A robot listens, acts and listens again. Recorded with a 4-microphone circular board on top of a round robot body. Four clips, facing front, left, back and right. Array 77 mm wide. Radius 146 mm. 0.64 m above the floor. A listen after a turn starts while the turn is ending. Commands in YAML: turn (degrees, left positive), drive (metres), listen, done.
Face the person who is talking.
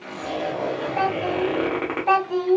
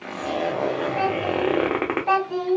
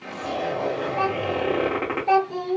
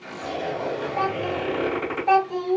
turn: 25
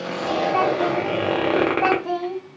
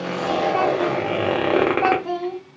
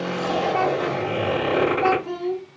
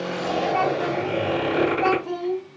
turn: 45
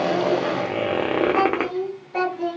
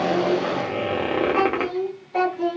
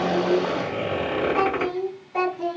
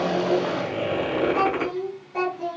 turn: 40
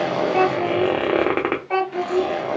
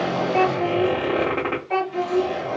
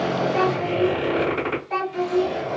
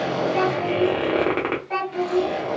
done: "Found it: a child speaking, straight ahead, 1 to 2 m away."